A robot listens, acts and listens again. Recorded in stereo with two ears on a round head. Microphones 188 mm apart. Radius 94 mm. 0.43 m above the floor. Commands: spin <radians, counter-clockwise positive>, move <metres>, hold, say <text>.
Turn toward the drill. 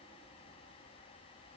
hold
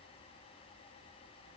hold
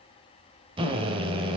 spin -0.44
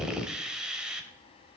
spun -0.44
say Found it: a drill, straight ahead.